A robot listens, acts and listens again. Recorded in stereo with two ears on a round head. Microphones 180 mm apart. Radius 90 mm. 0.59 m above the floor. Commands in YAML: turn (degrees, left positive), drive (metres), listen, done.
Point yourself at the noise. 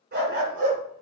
turn: -45
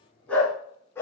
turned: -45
turn: 10
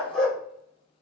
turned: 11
done: "Found it: a dog barking, straight ahead, 2 to 4 m away."